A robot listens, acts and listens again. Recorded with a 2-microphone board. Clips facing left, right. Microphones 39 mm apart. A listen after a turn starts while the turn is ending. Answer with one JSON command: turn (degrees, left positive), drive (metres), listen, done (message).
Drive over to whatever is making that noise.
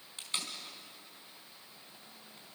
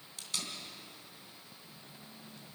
{"turn": 30}
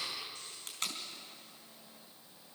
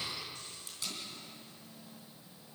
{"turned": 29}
{"turn": 120}
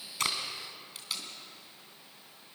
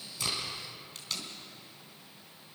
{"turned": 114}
{"turn": 10}
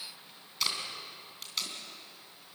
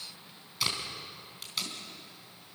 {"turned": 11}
{"drive": 1.0}
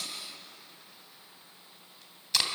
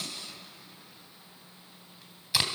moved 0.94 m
{"turn": -10}
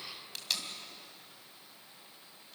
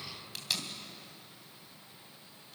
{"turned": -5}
{"drive": 1.0}
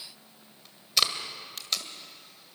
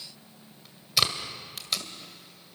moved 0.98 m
{"drive": 1.0}
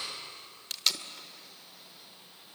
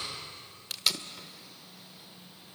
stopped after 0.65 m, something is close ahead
{"done": "Arrived at the tape being pulled, straight ahead."}